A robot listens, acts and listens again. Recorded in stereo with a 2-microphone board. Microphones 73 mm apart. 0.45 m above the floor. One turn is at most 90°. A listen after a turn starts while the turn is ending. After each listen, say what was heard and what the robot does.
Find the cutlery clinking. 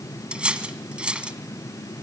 Turn 30° right.
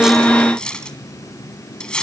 So it is at 10° left. Turn 10° left.
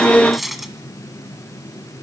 Found it: cutlery clinking, straight ahead.